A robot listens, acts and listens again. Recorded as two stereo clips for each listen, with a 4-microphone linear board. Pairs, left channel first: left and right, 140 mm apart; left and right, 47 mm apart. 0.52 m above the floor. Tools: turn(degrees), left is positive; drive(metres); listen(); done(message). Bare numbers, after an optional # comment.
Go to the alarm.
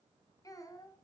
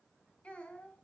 listen()
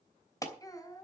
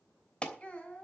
# The alarm: about 25° left or 155° left.
turn(25)
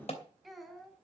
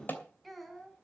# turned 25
# So it is at 130° left.
turn(130)
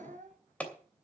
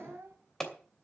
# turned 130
# The alarm is now 10° left.
turn(10)
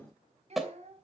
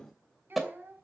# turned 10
drive(1.0)
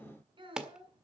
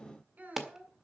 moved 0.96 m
drive(1.0)
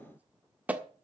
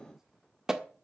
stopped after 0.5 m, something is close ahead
# The alarm is now 15° right.
turn(-15)
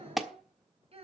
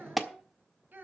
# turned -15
done("Arrived at the alarm, straight ahead.")